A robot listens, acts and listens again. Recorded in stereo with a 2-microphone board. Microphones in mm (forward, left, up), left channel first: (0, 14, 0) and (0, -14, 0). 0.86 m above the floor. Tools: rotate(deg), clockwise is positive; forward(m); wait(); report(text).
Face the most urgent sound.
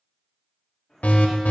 rotate(-70)
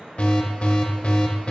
rotate(-45)
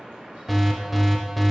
report("Facing the alarm, under 1 m away.")